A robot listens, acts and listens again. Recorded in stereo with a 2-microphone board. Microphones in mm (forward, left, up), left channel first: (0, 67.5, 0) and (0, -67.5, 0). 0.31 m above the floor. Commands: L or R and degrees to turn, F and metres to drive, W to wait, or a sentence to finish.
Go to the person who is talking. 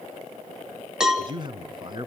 R35
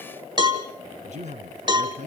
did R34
R105
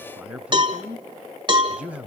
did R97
R10
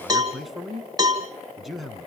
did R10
F1.0
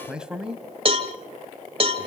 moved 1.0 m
F1.0
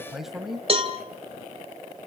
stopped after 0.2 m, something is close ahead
I am next to the man speaking.